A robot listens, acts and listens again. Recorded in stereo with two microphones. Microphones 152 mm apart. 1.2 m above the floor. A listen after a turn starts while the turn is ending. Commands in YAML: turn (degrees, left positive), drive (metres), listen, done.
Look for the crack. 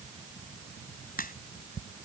turn: 90
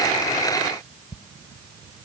done: "I heard a crack from this way, but can't make it out now."